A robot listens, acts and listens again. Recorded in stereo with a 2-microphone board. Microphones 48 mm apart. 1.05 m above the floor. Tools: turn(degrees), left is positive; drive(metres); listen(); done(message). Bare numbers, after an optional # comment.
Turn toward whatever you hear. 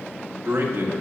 # The man speaking: about 65° right or 115° right.
turn(-65)
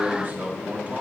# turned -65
# So it is at 35° right.
turn(-35)
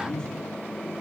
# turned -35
# The man speaking is now 20° left.
turn(20)
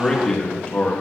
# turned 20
# The man speaking is now 30° left.
turn(30)
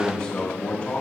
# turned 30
# The man speaking is now 25° left.
turn(25)
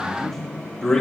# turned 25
# The man speaking is now 10° left.
turn(10)
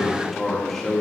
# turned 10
done("Facing the man speaking, 1 to 2 m away.")